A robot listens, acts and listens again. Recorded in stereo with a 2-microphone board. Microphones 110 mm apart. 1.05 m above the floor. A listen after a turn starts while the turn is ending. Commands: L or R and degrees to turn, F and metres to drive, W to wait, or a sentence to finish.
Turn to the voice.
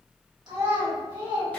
R40
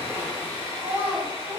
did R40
R100
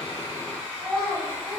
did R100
Facing the child speaking.